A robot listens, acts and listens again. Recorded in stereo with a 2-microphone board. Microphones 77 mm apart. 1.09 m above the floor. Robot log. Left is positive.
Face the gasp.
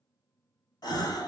note: The gasp: about 65° left or 115° left.
cmd yaw +65
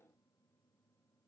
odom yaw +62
cmd idle
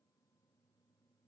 end: I heard a gasp, but can't make it out now. It was about straight ahead or 55° left.